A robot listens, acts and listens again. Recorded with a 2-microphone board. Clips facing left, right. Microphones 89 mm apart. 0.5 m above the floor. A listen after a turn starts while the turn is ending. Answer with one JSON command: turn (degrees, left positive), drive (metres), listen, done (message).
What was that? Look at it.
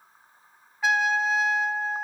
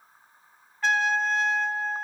{"turn": 30}
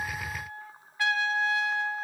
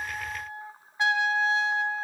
{"turn": -20}
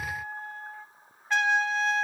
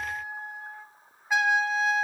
{"turn": -10}
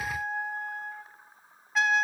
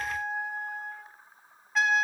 {"done": "Found it: a trumpet, straight ahead."}